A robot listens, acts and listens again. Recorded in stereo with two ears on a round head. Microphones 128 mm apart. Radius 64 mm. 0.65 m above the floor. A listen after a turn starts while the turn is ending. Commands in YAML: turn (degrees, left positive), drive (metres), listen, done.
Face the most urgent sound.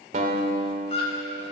turn: 40
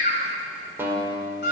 turn: 95
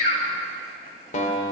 listen: true
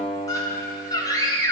turn: 25
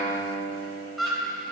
done: "Found it: a scream, straight ahead."